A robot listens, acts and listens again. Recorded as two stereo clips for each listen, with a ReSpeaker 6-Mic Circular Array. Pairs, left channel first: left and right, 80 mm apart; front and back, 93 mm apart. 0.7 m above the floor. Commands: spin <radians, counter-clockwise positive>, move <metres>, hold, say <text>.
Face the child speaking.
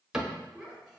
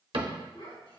say Found it: a child speaking, straight ahead, 2 to 4 m away.